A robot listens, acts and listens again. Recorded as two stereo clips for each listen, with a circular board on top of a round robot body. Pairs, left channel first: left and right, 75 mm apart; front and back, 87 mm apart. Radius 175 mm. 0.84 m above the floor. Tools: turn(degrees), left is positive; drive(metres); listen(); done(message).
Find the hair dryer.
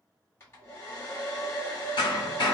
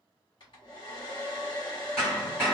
turn(degrees=35)
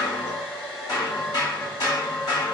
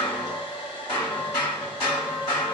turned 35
done("Found it: a hair dryer, straight ahead, 1 to 2 m away.")